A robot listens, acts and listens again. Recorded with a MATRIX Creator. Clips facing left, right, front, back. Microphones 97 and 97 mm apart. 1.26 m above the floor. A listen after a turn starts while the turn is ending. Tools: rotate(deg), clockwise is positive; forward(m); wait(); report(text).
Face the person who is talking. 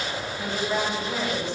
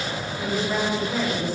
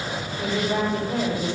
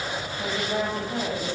rotate(10)
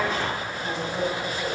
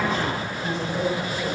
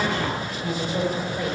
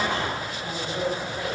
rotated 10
report("Facing the woman speaking, over 4 m away.")